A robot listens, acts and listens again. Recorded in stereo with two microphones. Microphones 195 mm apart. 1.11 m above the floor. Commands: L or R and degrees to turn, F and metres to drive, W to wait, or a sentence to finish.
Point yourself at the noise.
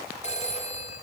L35
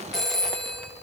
Found it: a phone ringing, straight ahead.